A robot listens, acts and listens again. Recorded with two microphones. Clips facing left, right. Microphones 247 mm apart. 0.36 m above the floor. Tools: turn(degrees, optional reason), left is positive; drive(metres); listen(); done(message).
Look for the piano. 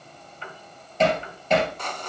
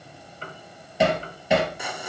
turn(degrees=-40, reason="The piano: about 40° right or 140° right.")
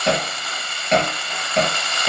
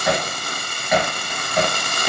listen()
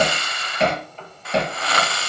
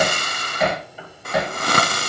turn(degrees=-10, reason="So it is at 10° right.")
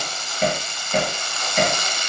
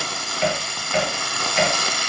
listen()
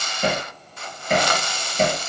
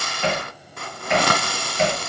listen()
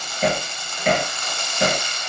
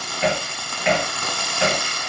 done("I heard a piano from this way, but can't make it out now.")